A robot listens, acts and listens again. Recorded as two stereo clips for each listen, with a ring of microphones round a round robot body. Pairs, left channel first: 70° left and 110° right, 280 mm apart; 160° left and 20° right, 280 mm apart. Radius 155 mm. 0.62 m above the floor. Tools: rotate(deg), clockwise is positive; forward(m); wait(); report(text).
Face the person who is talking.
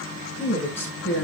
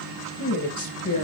rotate(-150)
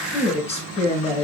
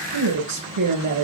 report("Facing the woman speaking, over 4 m away.")